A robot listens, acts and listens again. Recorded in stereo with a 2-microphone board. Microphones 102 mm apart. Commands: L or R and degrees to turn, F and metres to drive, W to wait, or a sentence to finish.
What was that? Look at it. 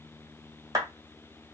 R35
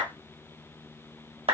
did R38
R105
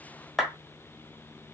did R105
Facing the clap, 1 to 2 m away.